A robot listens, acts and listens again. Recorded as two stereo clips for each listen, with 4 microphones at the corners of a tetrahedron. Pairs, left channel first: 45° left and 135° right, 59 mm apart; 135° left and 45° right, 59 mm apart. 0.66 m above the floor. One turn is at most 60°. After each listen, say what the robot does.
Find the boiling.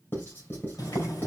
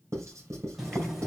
Turn 35° left.
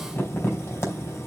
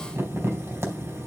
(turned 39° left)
Found it: boiling, straight ahead.